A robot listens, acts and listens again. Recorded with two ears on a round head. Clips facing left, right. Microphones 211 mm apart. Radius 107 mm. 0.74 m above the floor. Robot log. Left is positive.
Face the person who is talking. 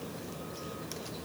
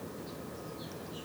cmd idle
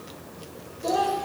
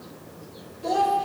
cmd yaw +30
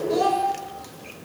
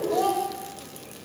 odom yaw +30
note: So it is at 150° left.
cmd yaw +150
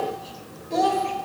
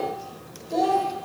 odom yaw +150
end: Found it: a child speaking, straight ahead, 1 to 2 m away.